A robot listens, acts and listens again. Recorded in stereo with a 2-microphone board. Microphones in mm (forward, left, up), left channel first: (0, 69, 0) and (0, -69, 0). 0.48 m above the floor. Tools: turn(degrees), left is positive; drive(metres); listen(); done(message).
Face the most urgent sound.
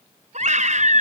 turn(degrees=-60)
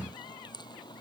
listen()
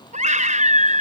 turn(degrees=-60)
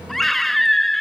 done("Facing the scream.")